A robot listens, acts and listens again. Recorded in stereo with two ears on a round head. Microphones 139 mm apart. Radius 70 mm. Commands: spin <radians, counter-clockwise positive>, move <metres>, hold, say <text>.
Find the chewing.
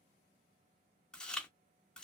spin 0.52
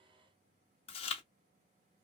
spin 2.53
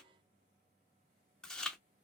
say Facing the chewing, under 1 m away.